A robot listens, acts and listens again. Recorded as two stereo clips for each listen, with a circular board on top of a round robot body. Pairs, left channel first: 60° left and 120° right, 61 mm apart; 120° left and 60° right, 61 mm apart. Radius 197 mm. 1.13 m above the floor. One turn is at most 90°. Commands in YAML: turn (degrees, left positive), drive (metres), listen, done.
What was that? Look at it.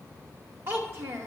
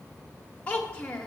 turn: -90
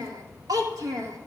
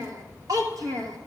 turn: -85
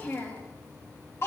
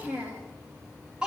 turn: 15
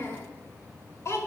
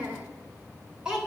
turn: 15
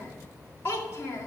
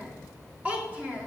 done: "Facing the child speaking."